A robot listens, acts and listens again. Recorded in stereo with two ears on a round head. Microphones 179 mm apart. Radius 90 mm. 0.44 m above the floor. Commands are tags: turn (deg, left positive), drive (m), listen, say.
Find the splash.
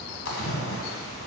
<turn deg="70"/>
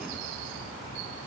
<listen/>
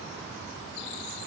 <say>I heard a splash, but can't make it out now. It was about straight ahead or 40° left.</say>